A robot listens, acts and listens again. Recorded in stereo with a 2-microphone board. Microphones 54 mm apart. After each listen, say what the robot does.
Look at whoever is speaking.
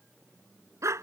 Keep listening.
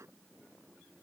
Keep listening.
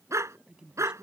Turn 15° right.
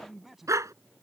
Facing the man speaking.